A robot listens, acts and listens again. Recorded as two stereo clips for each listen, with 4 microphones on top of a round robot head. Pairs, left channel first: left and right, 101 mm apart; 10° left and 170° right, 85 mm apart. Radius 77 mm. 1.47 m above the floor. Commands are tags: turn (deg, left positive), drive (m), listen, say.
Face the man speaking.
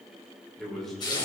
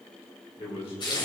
<say>Found it: a man speaking, straight ahead.</say>